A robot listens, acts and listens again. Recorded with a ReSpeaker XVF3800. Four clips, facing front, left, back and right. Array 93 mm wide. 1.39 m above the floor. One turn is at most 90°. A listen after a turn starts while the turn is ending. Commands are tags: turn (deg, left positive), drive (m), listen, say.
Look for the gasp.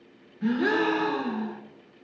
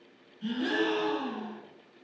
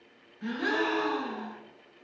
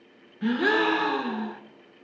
<turn deg="-90"/>
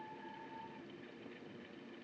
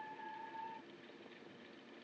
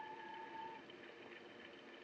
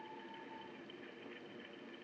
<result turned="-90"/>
<say>I heard a gasp from this way, but can't make it out now.</say>